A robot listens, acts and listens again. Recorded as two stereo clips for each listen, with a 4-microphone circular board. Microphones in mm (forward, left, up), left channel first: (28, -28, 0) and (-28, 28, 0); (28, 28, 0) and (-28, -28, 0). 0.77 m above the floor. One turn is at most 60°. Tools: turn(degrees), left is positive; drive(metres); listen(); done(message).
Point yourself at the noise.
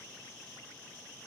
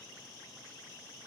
listen()
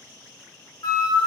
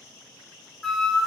turn(degrees=-40)
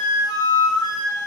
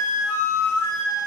turn(degrees=-15)
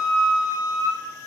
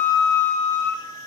done("Facing the flute.")